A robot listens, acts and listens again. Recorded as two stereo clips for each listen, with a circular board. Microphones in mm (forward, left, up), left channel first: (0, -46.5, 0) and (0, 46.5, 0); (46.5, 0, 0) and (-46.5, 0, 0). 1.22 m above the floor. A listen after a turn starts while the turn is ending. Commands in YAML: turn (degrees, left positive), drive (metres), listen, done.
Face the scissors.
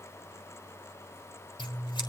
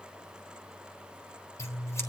turn: -60
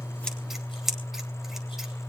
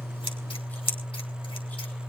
done: "Found it: scissors, straight ahead."